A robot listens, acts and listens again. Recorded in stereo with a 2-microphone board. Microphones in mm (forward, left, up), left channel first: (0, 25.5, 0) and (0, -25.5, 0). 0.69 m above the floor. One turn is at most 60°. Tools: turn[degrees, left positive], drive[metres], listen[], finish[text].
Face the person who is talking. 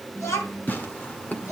Thought: The child speaking: about 70° left or 110° left.
Action: turn[60]
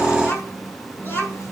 Thought: So it is at 45° left.
Action: turn[45]
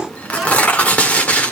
Action: finish[Facing the child speaking, over 4 m away.]